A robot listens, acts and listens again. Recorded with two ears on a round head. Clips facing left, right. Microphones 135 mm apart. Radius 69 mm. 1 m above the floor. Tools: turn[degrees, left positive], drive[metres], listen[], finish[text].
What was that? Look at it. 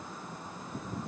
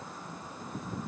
Action: listen[]
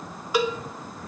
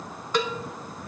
Action: turn[30]
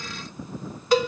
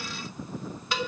Thought: So it is at 140° left.
Action: turn[140]
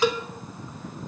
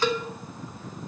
Thought: The cowbell is now 10° left.
Action: turn[10]
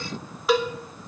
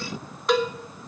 Action: finish[Found it: a cowbell, straight ahead, under 1 m away.]